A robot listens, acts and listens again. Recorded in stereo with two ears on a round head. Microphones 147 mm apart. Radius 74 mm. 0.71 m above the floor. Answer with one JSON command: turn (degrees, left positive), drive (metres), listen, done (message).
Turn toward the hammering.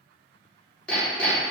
{"turn": 30}
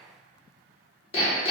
{"turn": 140}
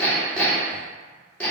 {"turn": 10}
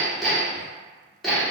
{"done": "Found it: hammering, straight ahead."}